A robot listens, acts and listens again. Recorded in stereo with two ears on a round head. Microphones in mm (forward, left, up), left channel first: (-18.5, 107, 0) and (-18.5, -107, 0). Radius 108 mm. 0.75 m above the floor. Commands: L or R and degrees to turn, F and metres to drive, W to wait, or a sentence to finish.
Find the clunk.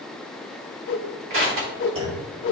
R25
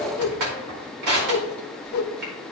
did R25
W
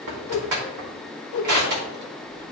I heard a clunk, but can't make it out now. It was about straight ahead or 130° right.